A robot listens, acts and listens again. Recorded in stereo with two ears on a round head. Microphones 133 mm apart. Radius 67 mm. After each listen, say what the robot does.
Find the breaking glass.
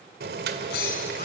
Turn 90° left.
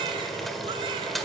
Facing where the breaking glass came from. I can't hear it now.